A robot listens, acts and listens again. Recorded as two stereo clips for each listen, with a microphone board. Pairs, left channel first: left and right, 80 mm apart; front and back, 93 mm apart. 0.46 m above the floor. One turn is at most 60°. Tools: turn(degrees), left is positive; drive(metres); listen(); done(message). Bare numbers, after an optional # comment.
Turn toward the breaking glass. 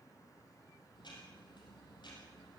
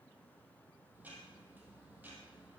listen()
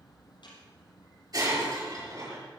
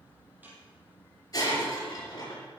# The breaking glass: 50° right.
turn(-50)
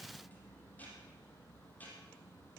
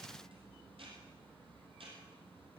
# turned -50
done("Facing where the breaking glass came from. I can't hear it now.")